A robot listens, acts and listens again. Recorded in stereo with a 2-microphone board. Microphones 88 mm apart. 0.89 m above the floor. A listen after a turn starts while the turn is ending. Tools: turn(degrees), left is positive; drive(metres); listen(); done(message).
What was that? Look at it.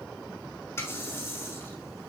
turn(degrees=30)
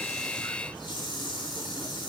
turn(degrees=120)
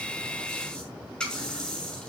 turn(degrees=10)
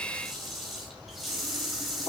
done("Facing the running tap, over 4 m away.")